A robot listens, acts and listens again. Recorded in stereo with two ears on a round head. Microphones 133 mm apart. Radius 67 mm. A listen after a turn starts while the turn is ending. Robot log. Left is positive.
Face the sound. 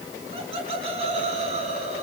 note: The laughter: about 45° right or 135° right.
cmd yaw -45
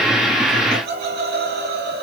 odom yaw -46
note: So it is at 70° right.
cmd yaw -70
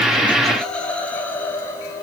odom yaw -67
note: The laughter is now 20° left.
cmd yaw +20
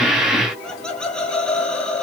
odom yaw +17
end: Facing the laughter, 2 to 4 m away.